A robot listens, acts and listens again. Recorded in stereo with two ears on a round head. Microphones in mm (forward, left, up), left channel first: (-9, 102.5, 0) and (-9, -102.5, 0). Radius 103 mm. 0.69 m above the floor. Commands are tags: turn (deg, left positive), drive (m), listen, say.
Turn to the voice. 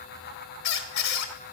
<listen/>
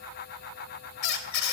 <listen/>
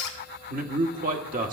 <turn deg="-35"/>
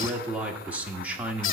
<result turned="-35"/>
<say>Facing the man speaking.</say>